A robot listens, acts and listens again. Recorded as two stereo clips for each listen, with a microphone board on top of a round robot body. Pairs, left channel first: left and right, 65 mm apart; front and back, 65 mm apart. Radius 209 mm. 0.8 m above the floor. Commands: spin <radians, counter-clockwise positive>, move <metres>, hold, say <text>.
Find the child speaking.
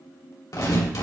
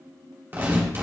hold
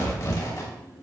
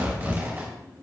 hold
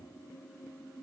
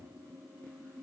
say I can't make out a child speaking to turn to.